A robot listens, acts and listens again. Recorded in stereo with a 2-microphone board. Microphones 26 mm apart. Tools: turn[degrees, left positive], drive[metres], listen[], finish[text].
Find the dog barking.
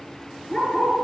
Thought: The dog barking: about 30° left or 150° left.
Action: turn[30]
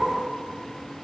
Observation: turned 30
Action: finish[Facing the dog barking, over 4 m away.]